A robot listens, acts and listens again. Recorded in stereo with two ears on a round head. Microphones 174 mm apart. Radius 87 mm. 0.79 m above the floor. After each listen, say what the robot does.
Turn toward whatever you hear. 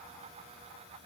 Keep listening.
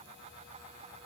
Keep listening.
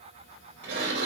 Turn 60° right.
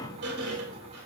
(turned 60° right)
Turn 60° right.
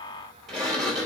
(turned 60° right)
Facing the sliding door, 2 to 4 m away.